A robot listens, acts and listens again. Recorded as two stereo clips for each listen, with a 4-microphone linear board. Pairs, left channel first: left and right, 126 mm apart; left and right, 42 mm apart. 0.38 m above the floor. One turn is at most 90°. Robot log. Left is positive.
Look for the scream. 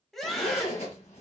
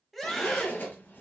cmd yaw +30
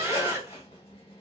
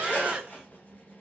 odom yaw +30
note: So it is at 30° right.
cmd yaw -30
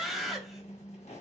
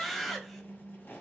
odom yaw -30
end: Facing the scream, 1 to 2 m away.